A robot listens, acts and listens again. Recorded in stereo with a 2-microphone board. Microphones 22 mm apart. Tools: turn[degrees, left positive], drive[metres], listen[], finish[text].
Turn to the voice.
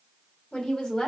Thought: The woman speaking: about 35° left or 145° left.
Action: turn[35]
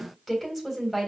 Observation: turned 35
Action: finish[Found it: a woman speaking, straight ahead.]